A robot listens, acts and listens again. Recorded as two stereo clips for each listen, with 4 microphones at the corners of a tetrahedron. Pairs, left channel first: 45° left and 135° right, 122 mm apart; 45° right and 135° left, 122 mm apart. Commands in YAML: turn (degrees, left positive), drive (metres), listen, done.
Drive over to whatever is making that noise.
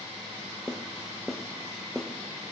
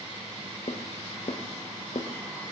turn: -40
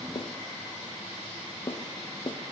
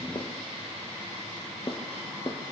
drive: 1.0
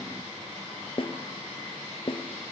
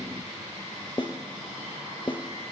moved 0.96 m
drive: 1.0
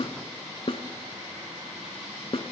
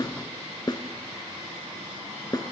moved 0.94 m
turn: 10
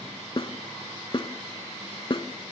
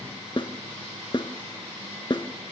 drive: 1.0
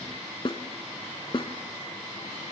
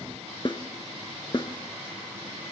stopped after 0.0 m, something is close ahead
done: "Arrived at the snare drum, straight ahead."